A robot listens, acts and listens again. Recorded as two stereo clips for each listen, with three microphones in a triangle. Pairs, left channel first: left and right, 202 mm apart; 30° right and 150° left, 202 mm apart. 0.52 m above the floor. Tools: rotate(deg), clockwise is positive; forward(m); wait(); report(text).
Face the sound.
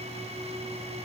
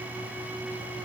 wait()
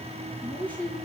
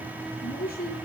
rotate(-10)
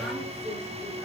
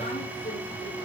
wait()
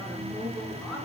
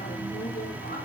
report("Found it: a woman speaking, straight ahead.")